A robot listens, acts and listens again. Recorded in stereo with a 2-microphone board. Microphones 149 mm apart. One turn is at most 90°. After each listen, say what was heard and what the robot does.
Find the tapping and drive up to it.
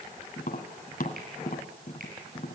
The tapping: about 65° left or 115° left. Turn 65° left.
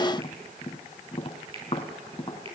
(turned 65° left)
So it is at 40° left. Turn 40° left.
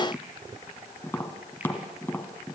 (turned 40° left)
The tapping is now 15° left. Turn 15° left.
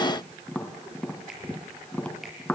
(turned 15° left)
The tapping is now 10° left. Turn 10° left.
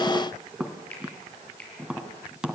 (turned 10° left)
Drive 1.0 m forward.
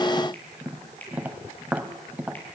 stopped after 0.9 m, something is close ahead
The tapping is now 10° right. Turn 10° right.
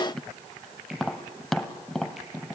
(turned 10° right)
I am next to the tapping.